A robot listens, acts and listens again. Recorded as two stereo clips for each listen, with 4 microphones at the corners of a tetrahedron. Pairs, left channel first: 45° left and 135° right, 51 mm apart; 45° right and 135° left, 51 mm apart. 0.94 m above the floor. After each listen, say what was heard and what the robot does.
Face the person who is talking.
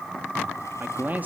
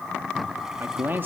The man speaking: straight behind. Turn 180° left.
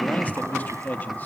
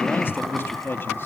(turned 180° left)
Found it: a man speaking, straight ahead, 2 to 4 m away.